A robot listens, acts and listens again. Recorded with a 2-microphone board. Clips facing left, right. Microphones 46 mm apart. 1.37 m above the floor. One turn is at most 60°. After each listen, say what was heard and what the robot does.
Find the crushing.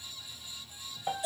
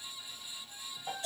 Keep listening.
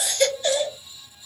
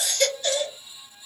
Keep listening.
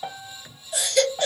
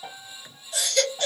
I can't make out crushing, only a baby crying and a piano.